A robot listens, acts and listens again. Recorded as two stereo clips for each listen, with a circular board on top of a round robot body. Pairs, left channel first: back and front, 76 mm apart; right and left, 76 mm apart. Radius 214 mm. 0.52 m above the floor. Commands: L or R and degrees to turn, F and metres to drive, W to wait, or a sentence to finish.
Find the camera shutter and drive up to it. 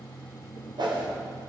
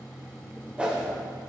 W
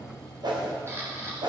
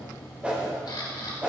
R55
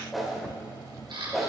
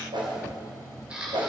L15
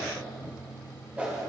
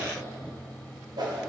W
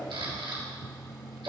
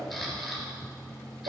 F1.0
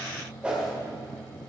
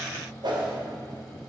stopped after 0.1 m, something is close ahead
W
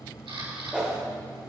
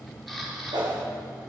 Blocked. The camera shutter is further on, straight ahead.